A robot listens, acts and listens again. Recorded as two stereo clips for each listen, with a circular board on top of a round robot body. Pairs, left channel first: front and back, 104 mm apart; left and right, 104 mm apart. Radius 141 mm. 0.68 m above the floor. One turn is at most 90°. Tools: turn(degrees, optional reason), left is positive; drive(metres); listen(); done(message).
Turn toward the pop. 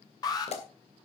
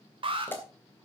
turn(degrees=20, reason="The pop: 20° left.")
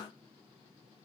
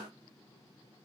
done("I heard a pop from this way, but can't make it out now.")